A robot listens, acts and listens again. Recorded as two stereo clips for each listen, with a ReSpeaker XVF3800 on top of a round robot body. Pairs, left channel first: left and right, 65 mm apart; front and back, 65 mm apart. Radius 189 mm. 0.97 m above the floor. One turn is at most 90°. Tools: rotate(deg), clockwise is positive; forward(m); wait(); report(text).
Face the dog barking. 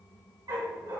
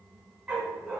rotate(90)
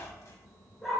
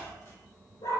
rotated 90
report("Found it: a dog barking, straight ahead, over 4 m away.")